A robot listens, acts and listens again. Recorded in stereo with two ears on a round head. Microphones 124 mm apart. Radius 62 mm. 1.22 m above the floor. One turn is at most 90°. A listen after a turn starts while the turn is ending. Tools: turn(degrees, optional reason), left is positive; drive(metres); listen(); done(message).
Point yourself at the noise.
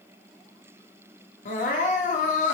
turn(degrees=55, reason="The crying: about 55° left or 125° left.")
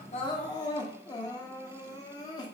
turn(degrees=35, reason="So it is at 35° left.")
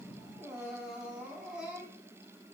done("Found it: crying, straight ahead, under 1 m away.")